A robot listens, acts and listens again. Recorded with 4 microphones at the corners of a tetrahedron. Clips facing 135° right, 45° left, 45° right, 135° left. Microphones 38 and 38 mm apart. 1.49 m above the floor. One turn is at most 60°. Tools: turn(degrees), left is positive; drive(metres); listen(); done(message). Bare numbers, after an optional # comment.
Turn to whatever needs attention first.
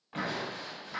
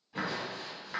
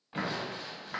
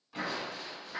listen()
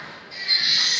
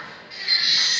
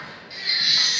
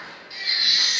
# The baby crying: 45° left.
turn(45)
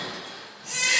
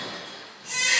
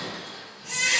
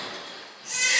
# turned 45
done("Found it: a baby crying, straight ahead, 1 to 2 m away.")